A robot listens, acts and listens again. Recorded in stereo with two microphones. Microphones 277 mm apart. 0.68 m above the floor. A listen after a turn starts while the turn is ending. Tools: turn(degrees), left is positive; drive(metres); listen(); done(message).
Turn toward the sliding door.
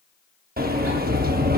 turn(degrees=-30)
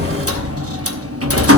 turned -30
turn(degrees=-110)
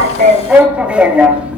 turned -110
done("Facing the sliding door.")